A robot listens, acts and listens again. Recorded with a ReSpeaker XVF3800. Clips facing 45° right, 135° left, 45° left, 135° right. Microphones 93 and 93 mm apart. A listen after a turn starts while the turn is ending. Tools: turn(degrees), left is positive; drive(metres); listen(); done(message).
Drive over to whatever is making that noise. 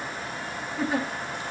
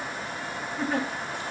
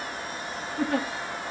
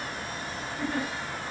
turn(degrees=40)
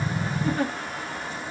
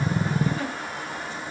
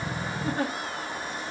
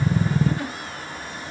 drive(metres=1.0)
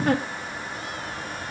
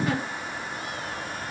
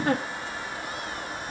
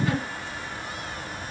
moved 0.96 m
drive(metres=1.0)
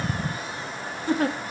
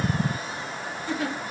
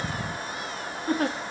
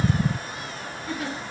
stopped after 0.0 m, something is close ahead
done("I am next to the giggle.")